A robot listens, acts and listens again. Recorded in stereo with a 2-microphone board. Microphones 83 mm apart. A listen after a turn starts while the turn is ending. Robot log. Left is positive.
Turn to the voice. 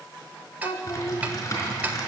note: The child speaking: about 75° left or 105° left.
cmd yaw +75
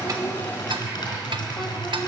cmd idle
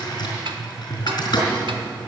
cmd idle
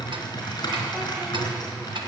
end: I heard a child speaking, but can't make it out now. It was about straight ahead or 30° left.